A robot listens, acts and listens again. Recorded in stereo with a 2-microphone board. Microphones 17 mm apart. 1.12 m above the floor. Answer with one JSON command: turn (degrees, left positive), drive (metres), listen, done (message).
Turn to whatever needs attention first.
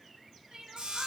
{"turn": -90}
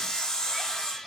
{"listen": true}
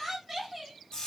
{"turn": -10}
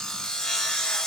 {"listen": true}
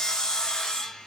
{"listen": true}
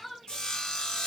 {"done": "Found it: crying, straight ahead."}